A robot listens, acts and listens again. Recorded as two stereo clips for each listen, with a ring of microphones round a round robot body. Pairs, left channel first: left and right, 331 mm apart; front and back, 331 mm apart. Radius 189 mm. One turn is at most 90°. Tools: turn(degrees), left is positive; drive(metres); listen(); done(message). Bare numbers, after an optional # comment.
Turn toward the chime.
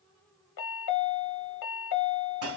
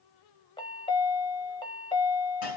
# The chime: 75° left.
turn(75)
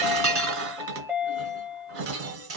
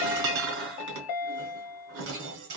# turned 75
# The chime is now 10° right.
turn(-10)
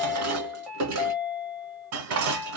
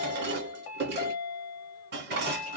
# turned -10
done("Facing the chime.")